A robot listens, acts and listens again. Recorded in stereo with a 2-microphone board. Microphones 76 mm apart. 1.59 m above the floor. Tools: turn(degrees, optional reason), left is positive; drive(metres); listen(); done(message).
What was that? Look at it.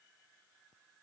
listen()
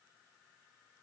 listen()
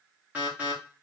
turn(degrees=-20, reason="The alarm: about 20° right or 160° right.")
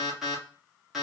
done("Found it: an alarm, straight ahead, 1 to 2 m away.")